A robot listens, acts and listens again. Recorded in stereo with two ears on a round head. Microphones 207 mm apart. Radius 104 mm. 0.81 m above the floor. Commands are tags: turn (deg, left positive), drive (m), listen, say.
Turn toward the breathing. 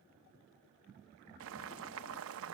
<listen/>
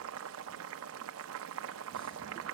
<listen/>
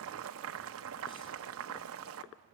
<say>I can't make out breathing to turn to.</say>